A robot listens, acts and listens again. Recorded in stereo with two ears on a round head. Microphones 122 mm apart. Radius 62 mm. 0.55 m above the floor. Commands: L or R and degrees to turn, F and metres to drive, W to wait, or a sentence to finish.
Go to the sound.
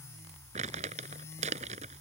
R55
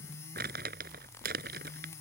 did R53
R70
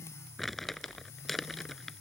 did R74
F1.0
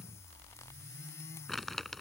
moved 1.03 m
F1.0
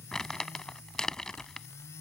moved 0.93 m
F1.0
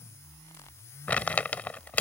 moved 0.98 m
L10
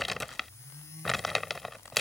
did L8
F1.0
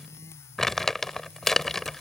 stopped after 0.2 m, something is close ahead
Arrived at the crumpling, straight ahead.